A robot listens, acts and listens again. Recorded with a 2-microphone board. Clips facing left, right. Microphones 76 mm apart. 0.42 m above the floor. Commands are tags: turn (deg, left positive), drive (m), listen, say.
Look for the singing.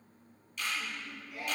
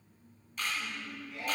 <turn deg="30"/>
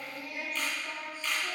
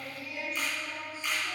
<turn deg="125"/>
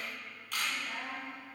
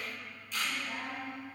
<say>Facing the singing, 1 to 2 m away.</say>